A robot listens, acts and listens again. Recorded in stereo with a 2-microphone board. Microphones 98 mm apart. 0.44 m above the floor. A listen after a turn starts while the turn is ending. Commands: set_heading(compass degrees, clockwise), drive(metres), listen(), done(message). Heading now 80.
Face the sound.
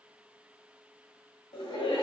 set_heading(15)
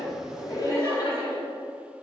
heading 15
set_heading(330)
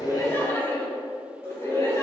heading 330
set_heading(295)
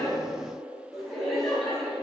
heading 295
done("Facing the laughter, 2 to 4 m away.")